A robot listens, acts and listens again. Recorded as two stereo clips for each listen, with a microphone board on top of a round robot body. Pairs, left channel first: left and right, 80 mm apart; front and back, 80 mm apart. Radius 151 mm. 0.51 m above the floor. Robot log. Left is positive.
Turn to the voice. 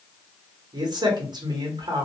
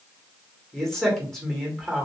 note: The man speaking: 85° right.
cmd yaw -85
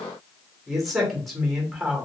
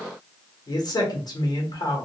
end: Facing the man speaking, 1 to 2 m away.